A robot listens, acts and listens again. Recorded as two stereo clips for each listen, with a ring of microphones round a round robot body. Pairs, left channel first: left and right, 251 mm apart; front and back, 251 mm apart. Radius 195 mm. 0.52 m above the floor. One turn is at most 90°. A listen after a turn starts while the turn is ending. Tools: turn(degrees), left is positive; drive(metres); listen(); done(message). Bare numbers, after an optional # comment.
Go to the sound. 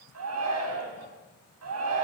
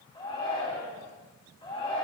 # The shout: 75° right.
turn(-75)
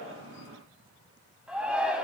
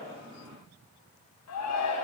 drive(1.0)
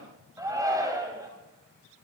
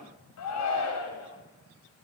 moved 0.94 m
# The shout is now 15° right.
turn(-15)
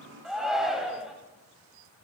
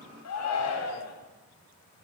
drive(1.0)
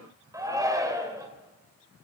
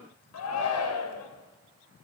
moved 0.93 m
# The shout is now 15° right.
turn(-15)
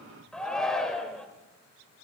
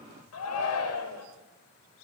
drive(1.0)
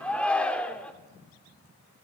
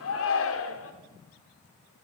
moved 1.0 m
drive(1.0)
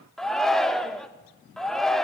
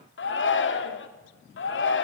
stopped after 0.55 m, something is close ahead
done("Arrived at the shout, straight ahead.")